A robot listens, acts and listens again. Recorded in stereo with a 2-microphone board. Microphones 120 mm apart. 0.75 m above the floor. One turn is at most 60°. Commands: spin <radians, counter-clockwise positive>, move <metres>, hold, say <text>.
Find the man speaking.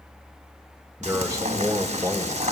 spin -0.44
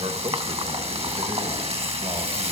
spin -1.05
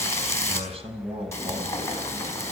spin -0.96
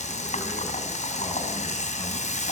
hold
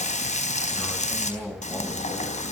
spin 0.17
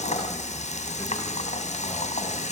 hold
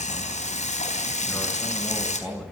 say Found it: a man speaking, straight ahead, over 4 m away.